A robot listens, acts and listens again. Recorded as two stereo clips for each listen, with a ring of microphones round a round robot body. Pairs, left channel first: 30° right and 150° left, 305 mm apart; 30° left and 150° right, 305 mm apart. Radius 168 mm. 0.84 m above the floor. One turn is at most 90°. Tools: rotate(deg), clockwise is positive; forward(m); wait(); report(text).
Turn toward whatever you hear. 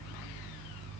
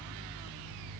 wait()
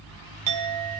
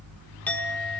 rotate(-90)
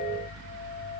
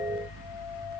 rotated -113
report("Facing the clink, 1 to 2 m away.")